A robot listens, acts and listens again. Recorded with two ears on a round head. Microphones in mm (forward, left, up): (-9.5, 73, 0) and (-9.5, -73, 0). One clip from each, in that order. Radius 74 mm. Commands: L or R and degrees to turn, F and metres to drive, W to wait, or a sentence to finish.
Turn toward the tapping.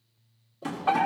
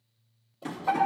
L30
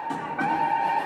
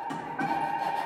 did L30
W
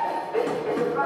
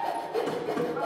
W
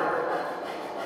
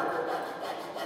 I heard tapping, but can't make it out now. It was about 15° right or 135° left.